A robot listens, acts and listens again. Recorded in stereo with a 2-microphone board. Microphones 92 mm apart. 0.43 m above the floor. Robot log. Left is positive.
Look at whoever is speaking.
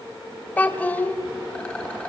note: The child speaking: about 20° left or 160° left.
cmd yaw +20
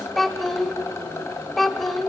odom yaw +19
end: Facing the child speaking.